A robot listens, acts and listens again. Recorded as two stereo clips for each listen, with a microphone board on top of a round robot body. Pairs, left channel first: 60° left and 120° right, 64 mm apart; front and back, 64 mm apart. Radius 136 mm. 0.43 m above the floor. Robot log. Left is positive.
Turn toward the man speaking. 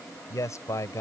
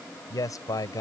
note: The man speaking: 20° left.
cmd yaw +20
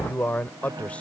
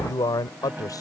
note: The man speaking is now 10° right.
cmd yaw -10
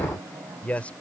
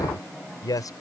note: The man speaking is now 10° right.
cmd yaw -10
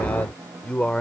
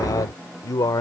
note: The man speaking is now 15° right.
cmd yaw -15
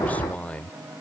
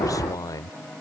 note: The man speaking is now 10° right.
cmd yaw -10
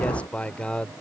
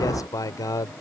note: The man speaking is now 15° right.
cmd yaw -15
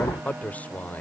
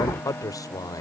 end: Found it: a man speaking, straight ahead.